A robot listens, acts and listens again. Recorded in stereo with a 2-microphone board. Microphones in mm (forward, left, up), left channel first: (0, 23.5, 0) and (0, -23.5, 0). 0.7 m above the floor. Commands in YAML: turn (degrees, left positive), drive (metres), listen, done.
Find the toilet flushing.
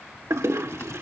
turn: -90
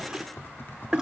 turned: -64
turn: -15
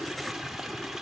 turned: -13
done: "Facing the toilet flushing."